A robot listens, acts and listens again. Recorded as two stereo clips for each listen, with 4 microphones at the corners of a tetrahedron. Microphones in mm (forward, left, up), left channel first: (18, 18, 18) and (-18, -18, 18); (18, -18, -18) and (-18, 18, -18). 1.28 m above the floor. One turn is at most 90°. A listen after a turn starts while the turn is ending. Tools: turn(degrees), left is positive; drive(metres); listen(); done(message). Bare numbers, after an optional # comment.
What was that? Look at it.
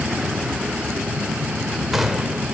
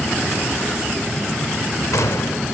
# The gunshot: 50° right.
turn(-50)
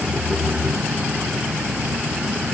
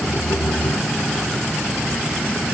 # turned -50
done("I heard a gunshot from this way, but can't make it out now.")